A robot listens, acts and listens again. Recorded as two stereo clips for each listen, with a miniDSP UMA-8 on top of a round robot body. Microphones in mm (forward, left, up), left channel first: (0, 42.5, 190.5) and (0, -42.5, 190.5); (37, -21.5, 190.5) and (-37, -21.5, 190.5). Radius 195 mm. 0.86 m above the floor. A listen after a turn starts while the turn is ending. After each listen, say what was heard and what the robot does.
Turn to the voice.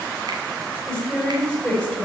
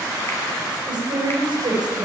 The woman speaking: straight behind. Turn 180° left.
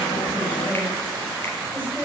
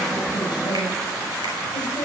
Keep listening.
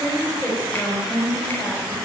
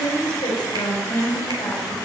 The woman speaking is now 25° left. Turn 25° left.
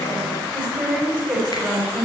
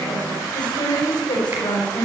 Found it: a woman speaking, straight ahead.